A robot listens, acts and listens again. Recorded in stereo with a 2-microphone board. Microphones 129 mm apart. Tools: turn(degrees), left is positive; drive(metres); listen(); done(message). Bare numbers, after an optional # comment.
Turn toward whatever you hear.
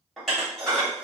turn(30)
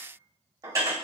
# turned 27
# So it is at 25° right.
turn(-25)
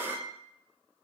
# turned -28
done("Facing the dishes clattering.")